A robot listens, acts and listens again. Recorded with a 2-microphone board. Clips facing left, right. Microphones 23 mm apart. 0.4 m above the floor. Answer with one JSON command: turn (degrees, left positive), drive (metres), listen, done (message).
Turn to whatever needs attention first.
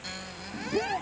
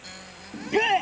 {"turn": -70}
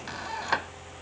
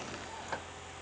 {"listen": true}
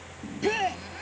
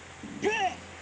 {"done": "Facing the shout."}